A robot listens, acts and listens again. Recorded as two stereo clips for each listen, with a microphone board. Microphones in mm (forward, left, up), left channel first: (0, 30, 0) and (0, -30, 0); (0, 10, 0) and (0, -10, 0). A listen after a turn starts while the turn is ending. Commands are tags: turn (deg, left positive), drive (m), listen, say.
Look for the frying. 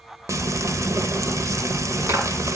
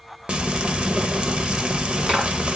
<turn deg="-60"/>
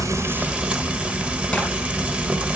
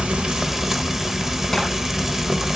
<turn deg="-25"/>
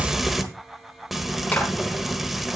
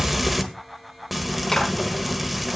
<say>Facing the frying.</say>